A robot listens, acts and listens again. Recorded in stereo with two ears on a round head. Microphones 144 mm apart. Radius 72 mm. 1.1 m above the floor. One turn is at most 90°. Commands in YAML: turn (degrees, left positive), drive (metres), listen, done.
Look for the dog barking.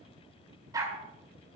turn: -20
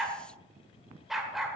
done: "Facing the dog barking."